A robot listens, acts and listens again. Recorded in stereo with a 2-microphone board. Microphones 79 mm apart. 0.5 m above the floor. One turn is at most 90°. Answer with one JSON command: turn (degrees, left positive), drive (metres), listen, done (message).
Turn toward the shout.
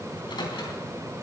{"listen": true}
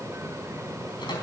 {"listen": true}
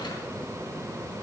{"done": "I can't make out a shout, only a microwave."}